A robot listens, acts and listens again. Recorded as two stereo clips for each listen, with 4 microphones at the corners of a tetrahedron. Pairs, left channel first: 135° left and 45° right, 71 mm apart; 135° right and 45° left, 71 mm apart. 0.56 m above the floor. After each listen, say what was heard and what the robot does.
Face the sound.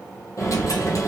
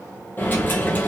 The dropped coin: 165° left. Turn 165° left.
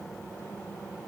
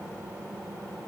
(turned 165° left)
Facing where the dropped coin came from. I can't hear it now.